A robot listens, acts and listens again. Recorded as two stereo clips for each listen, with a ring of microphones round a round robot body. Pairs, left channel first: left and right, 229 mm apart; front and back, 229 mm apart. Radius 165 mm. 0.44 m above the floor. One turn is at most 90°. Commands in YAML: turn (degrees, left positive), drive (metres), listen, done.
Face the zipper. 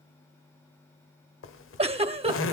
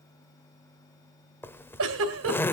turn: 80
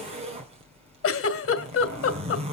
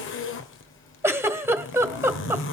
turn: -25
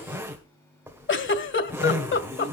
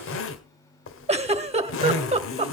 turn: -10
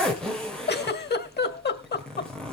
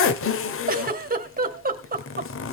done: "Found it: a zipper, straight ahead, 1 to 2 m away."